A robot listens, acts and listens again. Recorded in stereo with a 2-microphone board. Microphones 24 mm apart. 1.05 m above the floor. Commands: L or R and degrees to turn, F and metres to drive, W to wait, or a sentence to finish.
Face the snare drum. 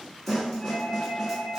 L30
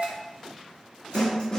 L140
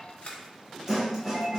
R20
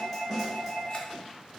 Found it: a snare drum, straight ahead.